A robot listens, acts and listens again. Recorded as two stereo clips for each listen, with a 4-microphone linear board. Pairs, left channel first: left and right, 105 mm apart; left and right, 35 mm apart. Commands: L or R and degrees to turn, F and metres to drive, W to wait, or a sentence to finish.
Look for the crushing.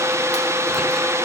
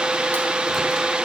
W
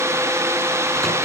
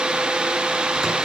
W
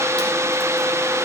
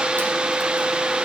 I can't make out crushing to turn to.